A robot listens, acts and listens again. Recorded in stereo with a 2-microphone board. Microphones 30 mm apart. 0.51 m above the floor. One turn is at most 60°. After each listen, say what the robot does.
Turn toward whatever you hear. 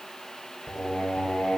Turn 60° left.
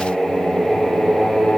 Turn 20° left.
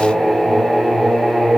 Facing the singing.